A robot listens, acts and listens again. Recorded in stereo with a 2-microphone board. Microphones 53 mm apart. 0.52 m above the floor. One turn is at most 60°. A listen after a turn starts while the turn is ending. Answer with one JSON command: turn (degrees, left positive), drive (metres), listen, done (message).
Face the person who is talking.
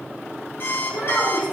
{"turn": 40}
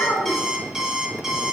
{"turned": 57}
{"listen": true}
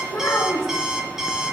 {"turn": 60}
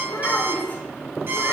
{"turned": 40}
{"turn": 40}
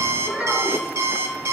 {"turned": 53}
{"turn": -10}
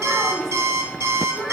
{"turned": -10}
{"done": "Facing the child speaking."}